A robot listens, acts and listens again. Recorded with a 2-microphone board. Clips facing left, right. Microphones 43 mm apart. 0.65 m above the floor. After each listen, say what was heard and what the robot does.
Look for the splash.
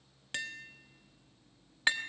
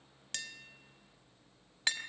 Keep listening.
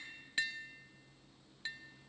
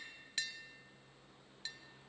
Keep listening.
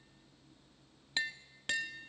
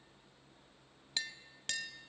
I can't make out a splash to turn to.